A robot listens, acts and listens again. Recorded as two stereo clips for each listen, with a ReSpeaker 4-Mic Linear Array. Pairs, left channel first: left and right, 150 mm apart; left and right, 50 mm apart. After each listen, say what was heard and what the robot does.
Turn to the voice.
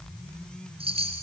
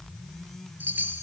Keep listening.
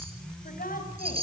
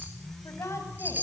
The woman speaking: about 70° left or 110° left. Turn 70° left.
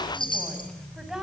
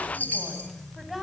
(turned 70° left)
Facing the woman speaking, over 4 m away.